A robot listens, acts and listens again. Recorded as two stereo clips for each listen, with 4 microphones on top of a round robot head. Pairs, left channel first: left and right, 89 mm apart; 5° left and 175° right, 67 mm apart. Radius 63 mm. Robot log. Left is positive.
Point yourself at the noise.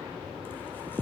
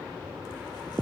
cmd idle
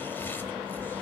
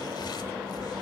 cmd idle
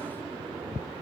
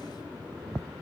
end: I can't make out anything.